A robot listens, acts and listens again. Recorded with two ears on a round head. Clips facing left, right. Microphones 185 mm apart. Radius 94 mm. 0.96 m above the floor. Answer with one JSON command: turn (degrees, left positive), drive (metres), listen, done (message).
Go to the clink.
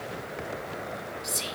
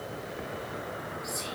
{"listen": true}
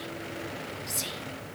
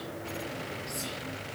{"listen": true}
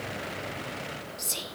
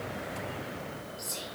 {"done": "I can't make out a clink, only whispering."}